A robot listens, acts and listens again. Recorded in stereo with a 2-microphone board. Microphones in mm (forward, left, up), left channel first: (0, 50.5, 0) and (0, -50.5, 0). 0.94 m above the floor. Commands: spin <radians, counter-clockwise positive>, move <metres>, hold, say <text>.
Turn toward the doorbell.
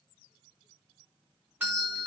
spin -0.52
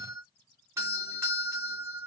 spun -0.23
spin -2.71
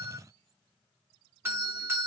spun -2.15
spin -0.52
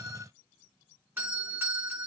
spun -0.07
spin -0.44
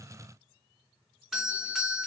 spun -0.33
say Facing the doorbell.